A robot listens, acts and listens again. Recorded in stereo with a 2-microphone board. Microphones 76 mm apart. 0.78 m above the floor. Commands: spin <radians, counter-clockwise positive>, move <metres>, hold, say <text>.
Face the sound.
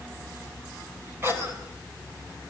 spin -0.61
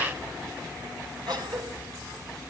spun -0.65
spin -1.92
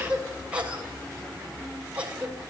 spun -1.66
spin -0.26
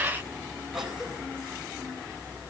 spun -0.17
say Found it: a cough, straight ahead, 2 to 4 m away.